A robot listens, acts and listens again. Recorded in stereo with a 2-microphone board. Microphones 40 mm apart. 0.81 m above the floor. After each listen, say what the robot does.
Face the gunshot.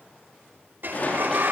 Turn 40° left.
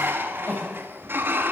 Keep listening.
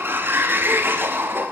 I heard a gunshot, but can't make it out now. It was about straight ahead or 100° left.